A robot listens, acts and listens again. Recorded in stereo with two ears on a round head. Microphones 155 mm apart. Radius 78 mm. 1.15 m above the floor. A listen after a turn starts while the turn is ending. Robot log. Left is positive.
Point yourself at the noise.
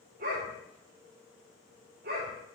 note: The dog barking: about 60° right or 120° right.
cmd yaw -60
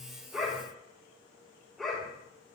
end: Facing the dog barking, over 4 m away.